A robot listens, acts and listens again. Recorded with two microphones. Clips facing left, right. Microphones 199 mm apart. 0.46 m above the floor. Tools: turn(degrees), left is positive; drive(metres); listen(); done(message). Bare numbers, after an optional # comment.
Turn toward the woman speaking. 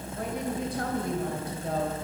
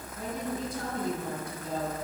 # The woman speaking: about 65° left or 115° left.
turn(65)
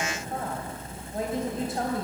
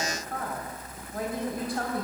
# So it is at 25° left.
turn(25)
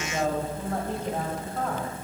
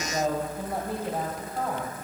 # The woman speaking is now 10° right.
turn(-10)
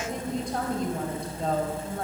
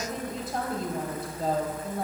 done("Found it: a woman speaking, straight ahead.")